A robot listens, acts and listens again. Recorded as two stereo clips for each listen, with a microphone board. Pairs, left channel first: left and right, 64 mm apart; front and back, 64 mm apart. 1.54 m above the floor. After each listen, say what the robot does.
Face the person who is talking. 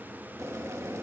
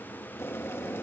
Keep listening.
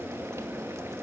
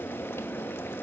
Keep listening.
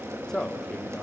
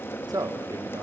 Turn 170° left.
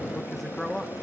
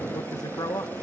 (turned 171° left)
Facing the man speaking, 1 to 2 m away.